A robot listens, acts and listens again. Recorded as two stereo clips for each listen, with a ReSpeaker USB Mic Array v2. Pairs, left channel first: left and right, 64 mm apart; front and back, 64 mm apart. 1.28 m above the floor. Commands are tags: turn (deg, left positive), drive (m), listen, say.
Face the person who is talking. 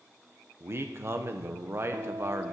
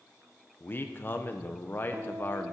<turn deg="-50"/>
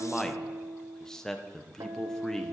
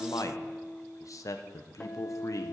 <turn deg="10"/>
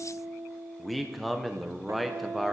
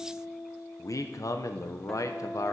<say>Found it: a man speaking, straight ahead, under 1 m away.</say>